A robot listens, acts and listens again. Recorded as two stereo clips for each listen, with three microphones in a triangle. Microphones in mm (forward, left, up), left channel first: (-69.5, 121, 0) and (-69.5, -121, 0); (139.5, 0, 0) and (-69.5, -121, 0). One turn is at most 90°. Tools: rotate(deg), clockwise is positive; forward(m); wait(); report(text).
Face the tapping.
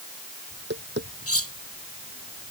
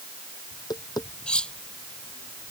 rotate(45)
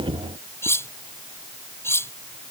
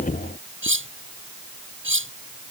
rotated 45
wait()
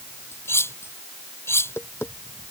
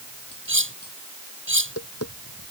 rotate(-10)
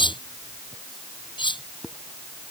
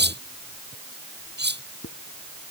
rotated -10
report("Found it: tapping, straight ahead.")